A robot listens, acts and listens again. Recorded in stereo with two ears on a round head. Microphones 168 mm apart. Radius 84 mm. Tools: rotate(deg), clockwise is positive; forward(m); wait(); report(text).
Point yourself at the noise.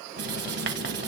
rotate(60)
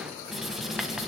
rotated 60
report("Facing the writing.")